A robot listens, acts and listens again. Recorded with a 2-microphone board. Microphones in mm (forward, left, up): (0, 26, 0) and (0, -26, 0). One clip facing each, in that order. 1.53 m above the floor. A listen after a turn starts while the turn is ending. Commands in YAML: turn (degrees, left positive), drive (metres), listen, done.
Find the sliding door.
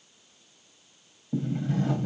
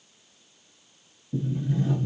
turn: 70
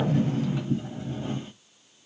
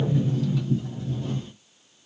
turn: 30
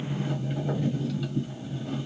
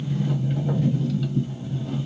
done: "Found it: a sliding door, straight ahead, 1 to 2 m away."